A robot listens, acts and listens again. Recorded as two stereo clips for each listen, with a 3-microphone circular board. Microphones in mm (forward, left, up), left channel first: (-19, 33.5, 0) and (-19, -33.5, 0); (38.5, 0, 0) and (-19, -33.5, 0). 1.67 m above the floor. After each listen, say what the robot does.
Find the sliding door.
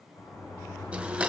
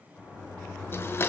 Turn 95° left.
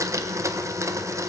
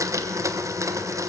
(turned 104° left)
Turn 10° right.
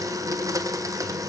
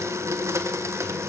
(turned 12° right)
Keep listening.
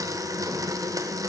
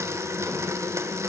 Facing where the sliding door came from. I can't hear it now.